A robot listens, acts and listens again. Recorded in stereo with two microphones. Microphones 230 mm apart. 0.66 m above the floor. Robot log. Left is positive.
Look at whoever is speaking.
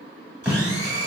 cmd idle
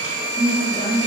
note: The woman speaking: about 40° left or 140° left.
cmd yaw +40
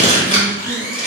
cmd idle
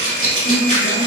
note: So it is at 90° left.
cmd yaw +90
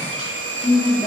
note: The woman speaking is now 25° right.
cmd yaw -25
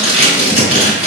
cmd idle
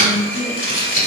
end: Facing the woman speaking.